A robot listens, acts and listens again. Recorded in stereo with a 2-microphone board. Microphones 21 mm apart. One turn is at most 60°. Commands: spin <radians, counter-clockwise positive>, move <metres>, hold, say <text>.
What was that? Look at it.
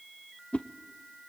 spin 1.05
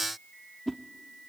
spin 0.17
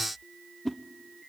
say Facing the whoosh, under 1 m away.